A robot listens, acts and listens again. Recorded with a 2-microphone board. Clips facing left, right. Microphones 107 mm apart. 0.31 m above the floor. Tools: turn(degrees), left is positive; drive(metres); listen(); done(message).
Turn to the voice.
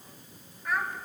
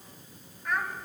turn(degrees=30)
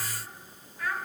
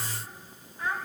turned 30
turn(degrees=-25)
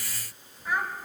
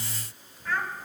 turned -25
turn(degrees=15)
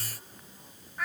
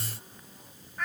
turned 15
done("Facing the child speaking.")